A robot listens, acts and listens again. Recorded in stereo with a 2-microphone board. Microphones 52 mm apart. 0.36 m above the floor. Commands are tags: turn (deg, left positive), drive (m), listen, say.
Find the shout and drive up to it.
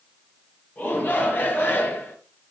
<turn deg="40"/>
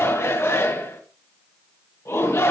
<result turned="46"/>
<turn deg="90"/>
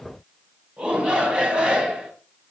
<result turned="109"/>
<turn deg="-15"/>
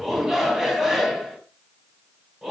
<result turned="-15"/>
<drive m="1.0"/>
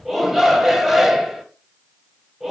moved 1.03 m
<drive m="1.0"/>
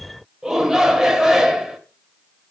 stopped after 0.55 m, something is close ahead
<turn deg="-15"/>
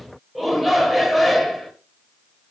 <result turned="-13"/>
<say>I am next to the shout.</say>